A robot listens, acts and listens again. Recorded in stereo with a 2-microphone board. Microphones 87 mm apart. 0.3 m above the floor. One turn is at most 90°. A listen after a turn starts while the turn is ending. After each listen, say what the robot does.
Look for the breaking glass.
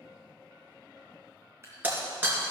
Turn 20° right.
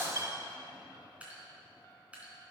Turn 90° right.
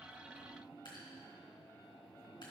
Turn 50° right.
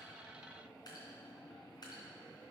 I heard breaking glass from this way, but can't make it out now.